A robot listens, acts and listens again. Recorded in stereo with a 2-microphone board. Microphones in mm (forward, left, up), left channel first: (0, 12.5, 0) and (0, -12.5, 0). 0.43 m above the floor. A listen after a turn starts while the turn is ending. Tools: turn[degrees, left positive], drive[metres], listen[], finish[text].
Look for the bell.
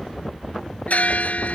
Action: turn[90]
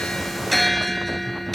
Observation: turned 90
Action: finish[Found it: a bell, straight ahead.]